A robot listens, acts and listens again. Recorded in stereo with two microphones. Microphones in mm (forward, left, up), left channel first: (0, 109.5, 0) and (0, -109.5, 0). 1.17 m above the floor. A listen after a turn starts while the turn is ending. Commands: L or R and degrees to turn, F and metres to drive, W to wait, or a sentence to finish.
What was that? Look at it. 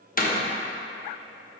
L40
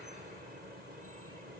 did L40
W
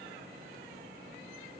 I heard a door slam, but can't make it out now. It was about straight ahead or 100° left.